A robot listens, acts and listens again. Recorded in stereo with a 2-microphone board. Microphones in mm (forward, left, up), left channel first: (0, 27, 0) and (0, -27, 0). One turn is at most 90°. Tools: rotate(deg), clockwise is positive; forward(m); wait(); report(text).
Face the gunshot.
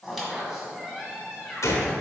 rotate(-70)
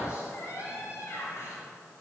wait()
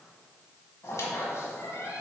report("I heard a gunshot, but can't make it out now. It was about straight ahead or 40° left.")